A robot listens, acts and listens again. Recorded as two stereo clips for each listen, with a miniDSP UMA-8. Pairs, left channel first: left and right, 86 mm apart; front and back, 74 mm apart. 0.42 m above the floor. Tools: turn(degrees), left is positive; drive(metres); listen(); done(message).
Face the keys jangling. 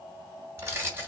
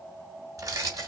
turn(degrees=-150)
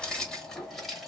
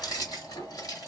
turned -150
done("Facing the keys jangling, 1 to 2 m away.")